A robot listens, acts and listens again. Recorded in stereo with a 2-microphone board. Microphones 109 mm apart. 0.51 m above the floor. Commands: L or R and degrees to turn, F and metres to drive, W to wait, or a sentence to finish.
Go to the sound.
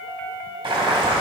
R50
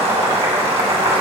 R80
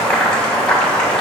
L10
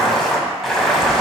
F1.0
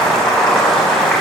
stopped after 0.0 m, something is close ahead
Blocked. The boiling is further on, straight ahead.